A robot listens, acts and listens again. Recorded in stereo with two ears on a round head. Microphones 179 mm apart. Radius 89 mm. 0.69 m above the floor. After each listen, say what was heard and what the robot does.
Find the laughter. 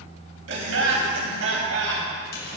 The laughter: about 70° right or 110° right. Turn 70° right.
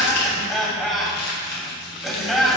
Found it: laughter, straight ahead.